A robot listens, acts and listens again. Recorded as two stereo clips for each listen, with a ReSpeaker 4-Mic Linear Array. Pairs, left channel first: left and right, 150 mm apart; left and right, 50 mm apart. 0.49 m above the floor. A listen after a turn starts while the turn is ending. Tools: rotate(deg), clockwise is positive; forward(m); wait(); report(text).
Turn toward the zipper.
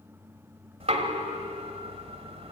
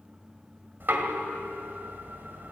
wait()
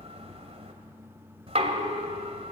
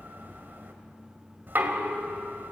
wait()
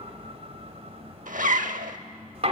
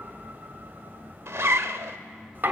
rotate(70)
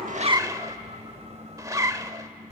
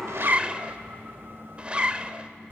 rotate(25)
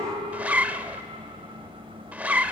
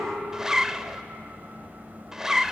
rotate(10)
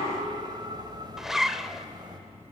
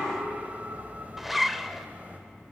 report("Facing the zipper.")